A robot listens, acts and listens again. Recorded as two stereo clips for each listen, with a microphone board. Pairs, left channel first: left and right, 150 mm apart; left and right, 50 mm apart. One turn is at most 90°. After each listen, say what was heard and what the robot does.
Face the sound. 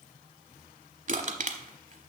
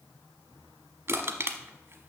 The crushing: about 60° right or 120° right. Turn 60° right.
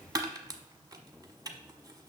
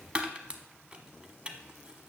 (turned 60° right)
So it is at 30° right. Turn 30° right.
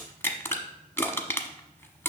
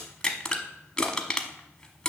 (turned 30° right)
The crushing is now 15° left. Turn 15° left.
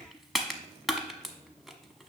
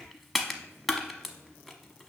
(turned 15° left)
Facing the crushing.